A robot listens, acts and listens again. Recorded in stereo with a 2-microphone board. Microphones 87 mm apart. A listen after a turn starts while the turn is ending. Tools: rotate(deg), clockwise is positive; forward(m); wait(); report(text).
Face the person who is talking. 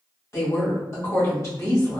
rotate(-40)
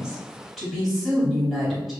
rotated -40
report("Found it: a woman speaking, straight ahead.")